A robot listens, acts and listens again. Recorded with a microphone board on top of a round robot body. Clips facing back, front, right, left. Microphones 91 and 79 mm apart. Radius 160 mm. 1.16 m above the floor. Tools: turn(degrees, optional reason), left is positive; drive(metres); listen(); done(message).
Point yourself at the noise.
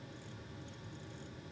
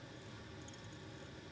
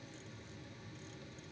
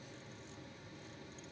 listen()
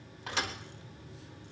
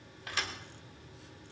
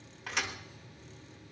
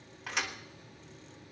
turn(degrees=180, reason="The thud: straight behind.")
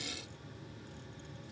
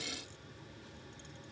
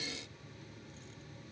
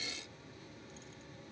done("Facing where the thud came from. I can't hear it now.")